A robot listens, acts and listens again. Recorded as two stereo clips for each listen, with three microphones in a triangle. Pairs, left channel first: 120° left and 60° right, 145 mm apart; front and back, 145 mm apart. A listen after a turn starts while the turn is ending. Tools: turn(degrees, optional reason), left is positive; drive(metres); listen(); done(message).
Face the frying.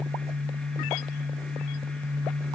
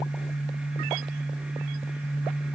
listen()
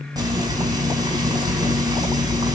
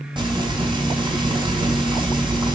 turn(degrees=-125, reason="The frying: 125° right.")
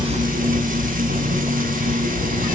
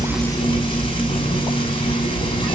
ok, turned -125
turn(degrees=-55, reason="The frying is now 55° right.")
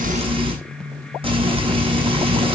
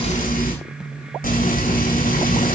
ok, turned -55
turn(degrees=-10, reason="The frying is now 10° right.")
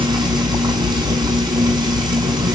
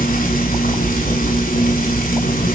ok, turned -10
done("Found it: frying, straight ahead.")